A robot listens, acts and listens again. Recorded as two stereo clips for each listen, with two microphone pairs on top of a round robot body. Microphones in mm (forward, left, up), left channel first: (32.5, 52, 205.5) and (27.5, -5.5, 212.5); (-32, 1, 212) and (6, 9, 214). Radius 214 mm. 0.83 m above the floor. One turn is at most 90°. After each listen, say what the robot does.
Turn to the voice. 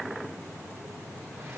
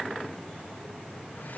Keep listening.
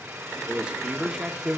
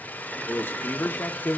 Turn 90° right.
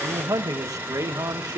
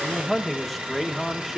Turn 80° right.
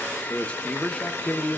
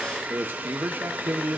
Turn 20° left.
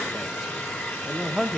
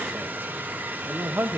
Found it: a man speaking, straight ahead, 1 to 2 m away.